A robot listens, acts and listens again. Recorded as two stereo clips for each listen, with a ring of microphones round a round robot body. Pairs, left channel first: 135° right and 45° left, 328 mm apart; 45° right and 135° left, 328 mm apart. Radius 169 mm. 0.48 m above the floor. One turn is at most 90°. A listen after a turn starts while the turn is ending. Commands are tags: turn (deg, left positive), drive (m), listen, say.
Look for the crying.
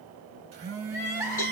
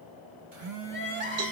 <turn deg="-90"/>
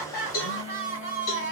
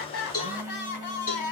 <turn deg="-80"/>
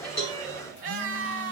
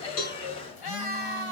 <turn deg="-20"/>
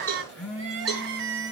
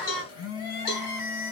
<turn deg="-10"/>
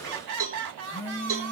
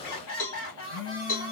<say>Found it: crying, straight ahead.</say>